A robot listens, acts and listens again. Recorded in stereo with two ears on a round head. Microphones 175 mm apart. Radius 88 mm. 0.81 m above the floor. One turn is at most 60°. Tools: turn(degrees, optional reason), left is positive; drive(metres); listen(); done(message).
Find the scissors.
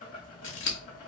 turn(degrees=60, reason="The scissors: about 65° left or 115° left.")
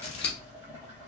turn(degrees=30, reason="So it is at 30° left.")
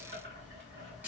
turn(degrees=-10, reason="The scissors is now 10° right.")
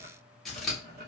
done("Facing the scissors, under 1 m away.")